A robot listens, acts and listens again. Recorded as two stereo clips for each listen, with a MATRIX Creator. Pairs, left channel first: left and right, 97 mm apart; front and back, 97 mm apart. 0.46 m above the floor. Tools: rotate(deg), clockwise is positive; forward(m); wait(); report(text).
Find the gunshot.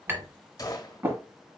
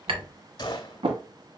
rotate(-40)
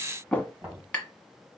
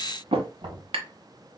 report("Facing where the gunshot came from. I can't hear it now.")